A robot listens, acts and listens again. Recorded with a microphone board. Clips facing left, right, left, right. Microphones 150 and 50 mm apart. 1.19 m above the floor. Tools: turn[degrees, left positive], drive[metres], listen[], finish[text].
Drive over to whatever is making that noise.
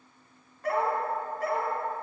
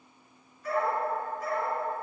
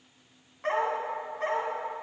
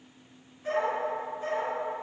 Thought: The dog barking: about 70° left or 110° left.
Action: turn[70]
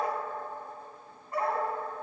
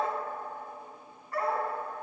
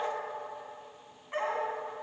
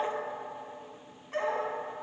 Thought: So it is at 25° left.
Action: turn[25]
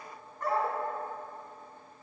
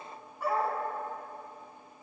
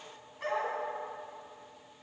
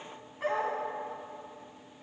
Action: drive[1.0]
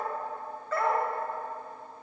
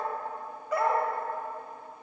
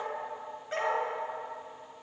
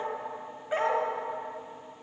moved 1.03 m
Thought: The dog barking is now 15° right.
Action: turn[-15]
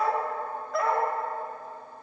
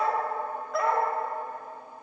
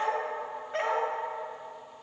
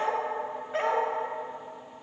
Action: drive[1.0]
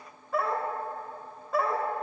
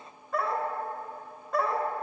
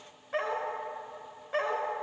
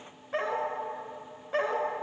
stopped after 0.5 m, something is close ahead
Action: finish[I am next to the dog barking.]